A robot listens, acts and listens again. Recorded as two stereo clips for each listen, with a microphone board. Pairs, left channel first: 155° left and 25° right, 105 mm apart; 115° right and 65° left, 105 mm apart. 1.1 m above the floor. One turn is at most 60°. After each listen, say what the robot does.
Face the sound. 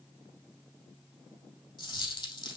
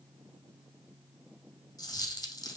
Turn 60° right.
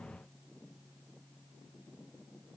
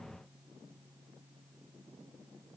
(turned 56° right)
Turn 60° right.
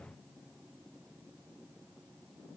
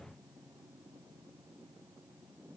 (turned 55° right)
Turn 50° right.
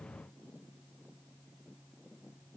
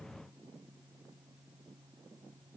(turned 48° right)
Facing where the dropped coin came from. I can't hear it now.